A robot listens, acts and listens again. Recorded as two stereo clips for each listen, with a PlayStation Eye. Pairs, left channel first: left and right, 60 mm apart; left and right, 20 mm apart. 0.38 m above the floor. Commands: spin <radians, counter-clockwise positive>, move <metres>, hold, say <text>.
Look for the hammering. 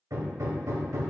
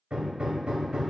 spin -1.13
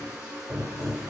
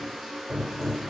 spin -0.44
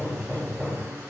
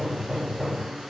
say Facing the hammering.